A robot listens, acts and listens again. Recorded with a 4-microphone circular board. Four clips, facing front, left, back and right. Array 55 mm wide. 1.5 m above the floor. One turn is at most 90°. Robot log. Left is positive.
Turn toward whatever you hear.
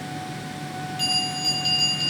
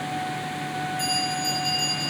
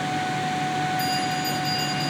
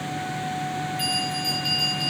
note: The bell: 25° right.
cmd yaw -25
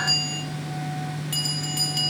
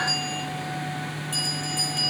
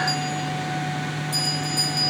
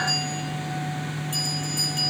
note: The bell is now 10° left.
cmd yaw +10
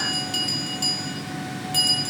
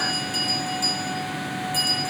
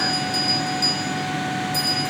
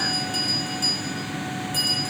end: Found it: a bell, straight ahead.